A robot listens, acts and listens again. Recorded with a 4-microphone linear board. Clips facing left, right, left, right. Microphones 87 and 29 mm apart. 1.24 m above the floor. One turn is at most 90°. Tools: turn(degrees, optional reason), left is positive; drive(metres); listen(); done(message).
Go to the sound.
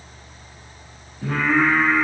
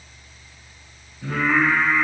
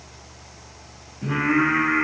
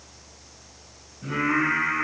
turn(degrees=90)
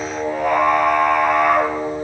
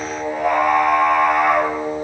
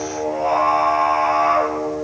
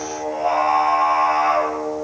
drive(metres=1.0)
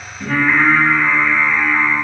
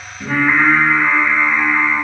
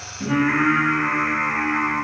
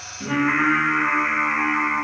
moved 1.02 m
turn(degrees=-10, reason="The singing is now 10° right.")
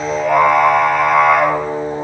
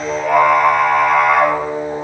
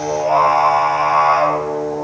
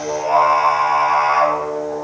drive(metres=1.0)
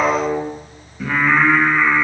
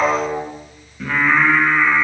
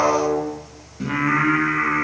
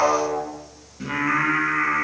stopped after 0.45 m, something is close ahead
done("I am next to the singing.")